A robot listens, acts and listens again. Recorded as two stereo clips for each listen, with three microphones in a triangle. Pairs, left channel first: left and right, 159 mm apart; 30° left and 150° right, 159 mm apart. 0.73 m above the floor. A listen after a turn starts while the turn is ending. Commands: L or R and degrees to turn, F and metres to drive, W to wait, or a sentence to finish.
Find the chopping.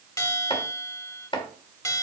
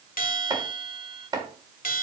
L145
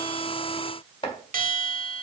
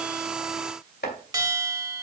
L35
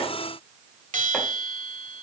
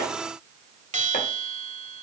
W
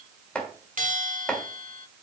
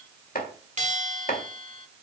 Found it: chopping, straight ahead.